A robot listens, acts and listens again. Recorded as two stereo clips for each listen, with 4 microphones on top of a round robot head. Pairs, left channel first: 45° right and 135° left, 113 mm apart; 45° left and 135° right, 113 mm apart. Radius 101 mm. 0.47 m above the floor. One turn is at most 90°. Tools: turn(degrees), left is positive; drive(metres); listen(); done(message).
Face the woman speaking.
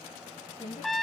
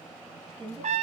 turn(degrees=-90)
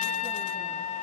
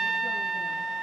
turn(degrees=-10)
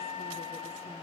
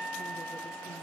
listen()
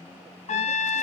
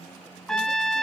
done("I heard a woman speaking from this way, but can't make it out now.")